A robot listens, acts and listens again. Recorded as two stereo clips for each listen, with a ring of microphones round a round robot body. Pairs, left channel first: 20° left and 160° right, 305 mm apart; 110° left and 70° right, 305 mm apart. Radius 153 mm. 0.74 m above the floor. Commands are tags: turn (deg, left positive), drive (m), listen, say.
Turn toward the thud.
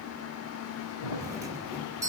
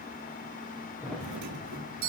<turn deg="25"/>
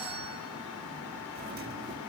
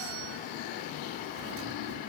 <say>I heard a thud from this way, but can't make it out now.</say>